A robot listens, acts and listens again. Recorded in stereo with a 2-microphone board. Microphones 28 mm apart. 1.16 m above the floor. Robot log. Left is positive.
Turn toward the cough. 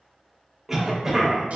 cmd yaw -30
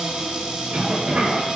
note: So it is at 145° right.
cmd yaw -145
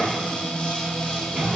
note: The cough is now 55° right.
cmd yaw -55
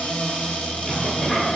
end: Facing the cough, under 1 m away.